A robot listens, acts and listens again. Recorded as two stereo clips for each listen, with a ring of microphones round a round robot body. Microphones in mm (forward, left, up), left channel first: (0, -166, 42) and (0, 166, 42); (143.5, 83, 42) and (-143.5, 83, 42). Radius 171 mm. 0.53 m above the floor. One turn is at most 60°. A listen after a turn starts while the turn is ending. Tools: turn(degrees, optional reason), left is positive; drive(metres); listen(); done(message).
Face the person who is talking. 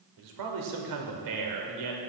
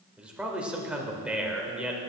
turn(degrees=60, reason="The man speaking: 95° left.")
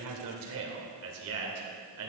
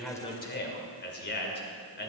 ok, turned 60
turn(degrees=50, reason="The man speaking is now 50° left.")
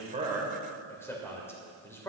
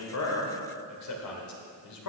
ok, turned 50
turn(degrees=-10, reason="The man speaking is now 10° right.")
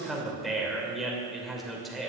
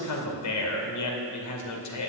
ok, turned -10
done("Found it: a man speaking, straight ahead, 2 to 4 m away.")